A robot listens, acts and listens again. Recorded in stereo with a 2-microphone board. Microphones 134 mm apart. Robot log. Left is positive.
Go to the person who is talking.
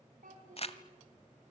cmd yaw -90
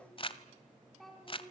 cmd fwd 1.0
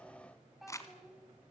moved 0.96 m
cmd fwd 1.0
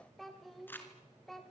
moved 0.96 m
cmd fwd 1.0
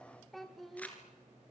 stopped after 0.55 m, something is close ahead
end: I am next to the child speaking.